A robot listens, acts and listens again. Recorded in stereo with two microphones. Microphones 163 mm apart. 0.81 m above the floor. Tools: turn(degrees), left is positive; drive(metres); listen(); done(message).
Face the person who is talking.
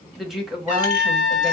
turn(degrees=-30)
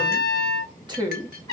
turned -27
turn(degrees=-150)
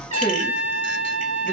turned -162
turn(degrees=15)
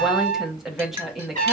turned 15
done("Found it: a woman speaking, straight ahead, 1 to 2 m away.")